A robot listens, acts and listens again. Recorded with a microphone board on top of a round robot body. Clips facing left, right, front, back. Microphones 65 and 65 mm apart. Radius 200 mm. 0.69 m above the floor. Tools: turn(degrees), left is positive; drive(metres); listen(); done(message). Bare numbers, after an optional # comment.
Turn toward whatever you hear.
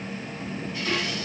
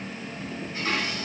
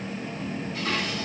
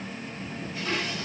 # The dishes clattering: 35° right.
turn(-35)
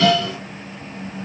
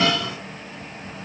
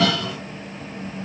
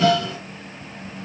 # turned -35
# The dishes clattering is now 25° right.
turn(-25)
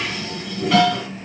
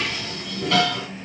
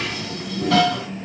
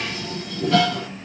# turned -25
done("Found it: dishes clattering, straight ahead.")